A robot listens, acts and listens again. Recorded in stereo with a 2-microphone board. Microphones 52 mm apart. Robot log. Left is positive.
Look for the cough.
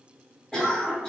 note: The cough: about 20° left or 160° left.
cmd yaw +20
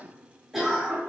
end: Facing the cough.